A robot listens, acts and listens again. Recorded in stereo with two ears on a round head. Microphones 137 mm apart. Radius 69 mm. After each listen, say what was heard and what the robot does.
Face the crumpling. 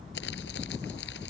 Turn 90° left.
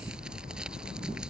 Found it: crumpling, straight ahead.